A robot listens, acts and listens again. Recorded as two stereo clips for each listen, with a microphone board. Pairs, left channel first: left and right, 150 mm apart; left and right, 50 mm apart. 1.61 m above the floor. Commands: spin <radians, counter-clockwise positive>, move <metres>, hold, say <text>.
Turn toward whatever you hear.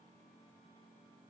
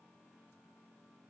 hold
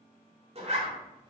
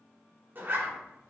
spin -0.79
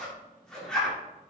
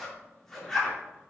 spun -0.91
say Facing the zipper.